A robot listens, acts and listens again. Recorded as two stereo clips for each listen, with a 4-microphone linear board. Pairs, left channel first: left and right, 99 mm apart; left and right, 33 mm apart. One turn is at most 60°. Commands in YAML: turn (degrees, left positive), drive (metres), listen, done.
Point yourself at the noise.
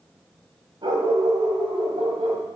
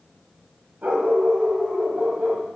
turn: -60
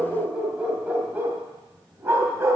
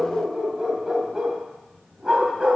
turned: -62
turn: -25
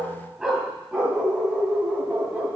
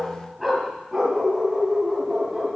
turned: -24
turn: -15
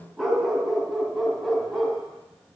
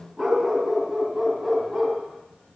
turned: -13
done: "Facing the dog barking."